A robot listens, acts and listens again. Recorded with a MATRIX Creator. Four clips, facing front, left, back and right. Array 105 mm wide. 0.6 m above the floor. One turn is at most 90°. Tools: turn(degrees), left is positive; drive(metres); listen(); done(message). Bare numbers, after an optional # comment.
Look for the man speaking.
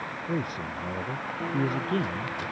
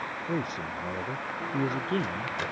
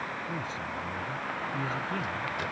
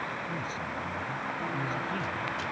# The man speaking: 50° left.
turn(50)
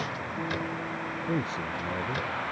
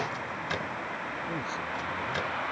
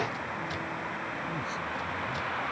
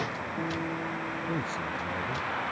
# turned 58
# The man speaking is now 10° right.
turn(-10)
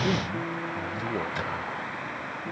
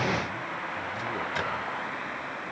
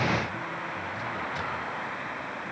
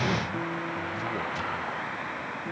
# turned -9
listen()
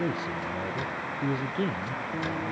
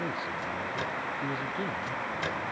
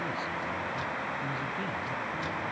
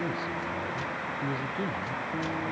done("Facing the man speaking.")